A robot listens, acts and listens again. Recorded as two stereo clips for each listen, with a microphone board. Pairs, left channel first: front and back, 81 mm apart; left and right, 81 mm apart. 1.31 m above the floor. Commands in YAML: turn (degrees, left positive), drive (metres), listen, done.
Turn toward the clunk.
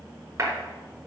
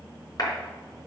listen: true
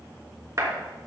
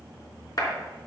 listen: true
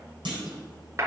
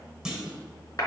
turn: -175
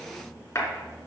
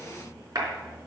done: "I heard a clunk from this way, but can't make it out now."